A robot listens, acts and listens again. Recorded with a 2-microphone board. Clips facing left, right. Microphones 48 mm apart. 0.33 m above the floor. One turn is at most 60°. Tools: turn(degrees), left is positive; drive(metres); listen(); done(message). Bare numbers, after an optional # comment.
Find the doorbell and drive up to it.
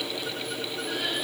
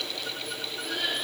listen()
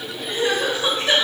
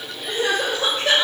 listen()
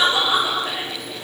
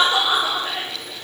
done("I can't make out a doorbell to turn to.")